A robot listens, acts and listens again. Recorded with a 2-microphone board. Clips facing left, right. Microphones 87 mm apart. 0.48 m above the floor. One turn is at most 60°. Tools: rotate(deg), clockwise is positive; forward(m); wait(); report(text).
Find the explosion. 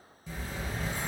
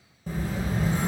rotate(50)
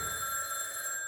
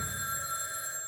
wait()
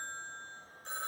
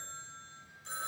report("I heard an explosion, but can't make it out now. It was about straight ahead or 80° right.")